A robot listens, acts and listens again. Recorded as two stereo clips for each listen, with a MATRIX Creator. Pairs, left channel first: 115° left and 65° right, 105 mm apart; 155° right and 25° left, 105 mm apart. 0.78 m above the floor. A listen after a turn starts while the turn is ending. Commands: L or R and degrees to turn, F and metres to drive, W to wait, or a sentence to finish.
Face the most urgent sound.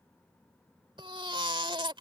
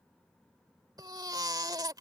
R30
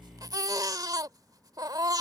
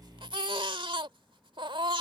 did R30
R15
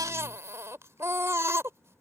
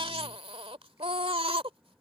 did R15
Found it: a baby crying, straight ahead.